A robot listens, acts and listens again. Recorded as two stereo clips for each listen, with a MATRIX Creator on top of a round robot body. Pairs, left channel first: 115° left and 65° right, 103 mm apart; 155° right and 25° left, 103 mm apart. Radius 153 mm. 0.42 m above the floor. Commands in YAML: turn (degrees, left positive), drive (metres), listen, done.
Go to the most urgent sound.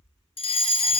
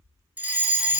turn: 95
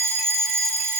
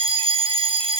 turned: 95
drive: 1.0
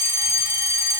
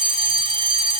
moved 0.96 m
drive: 1.0
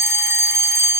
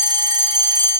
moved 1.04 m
turn: -10
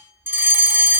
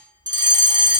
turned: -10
drive: 1.0
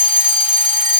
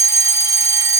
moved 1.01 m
drive: 1.0
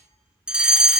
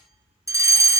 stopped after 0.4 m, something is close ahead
done: "I am next to the fire alarm."